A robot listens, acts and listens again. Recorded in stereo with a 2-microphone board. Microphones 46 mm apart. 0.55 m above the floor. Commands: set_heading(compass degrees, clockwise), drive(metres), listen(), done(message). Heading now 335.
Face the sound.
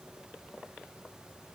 listen()
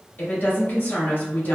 set_heading(285)
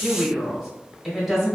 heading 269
done("Found it: a woman speaking, straight ahead.")